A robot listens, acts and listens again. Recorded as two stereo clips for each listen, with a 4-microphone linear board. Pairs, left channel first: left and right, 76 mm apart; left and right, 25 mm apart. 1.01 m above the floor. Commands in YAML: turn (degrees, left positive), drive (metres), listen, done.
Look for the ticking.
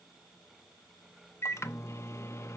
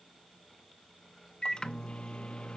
listen: true
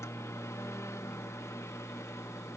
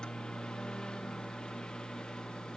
listen: true
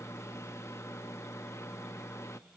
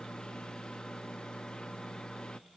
done: "I can't make out ticking, only a microwave."